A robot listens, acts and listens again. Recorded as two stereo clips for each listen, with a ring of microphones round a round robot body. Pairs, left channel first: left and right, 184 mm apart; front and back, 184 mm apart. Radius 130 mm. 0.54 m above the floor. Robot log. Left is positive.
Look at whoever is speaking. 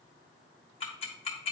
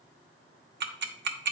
cmd idle
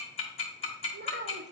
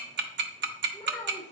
note: The child speaking: 80° right.
cmd yaw -80
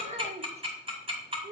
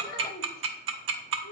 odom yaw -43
note: The child speaking is now 40° right.
cmd yaw -40
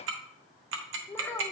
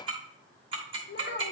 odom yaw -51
note: The child speaking is now 10° left.
cmd yaw +10
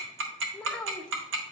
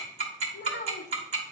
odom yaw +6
end: Found it: a child speaking, straight ahead, 1 to 2 m away.